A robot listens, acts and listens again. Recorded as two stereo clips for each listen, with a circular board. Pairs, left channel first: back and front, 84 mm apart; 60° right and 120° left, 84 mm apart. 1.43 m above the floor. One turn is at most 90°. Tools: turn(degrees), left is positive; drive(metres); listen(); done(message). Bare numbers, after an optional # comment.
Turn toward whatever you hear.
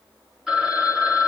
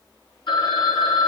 # The phone ringing: 85° right.
turn(-85)
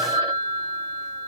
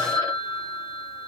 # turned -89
done("Facing the phone ringing.")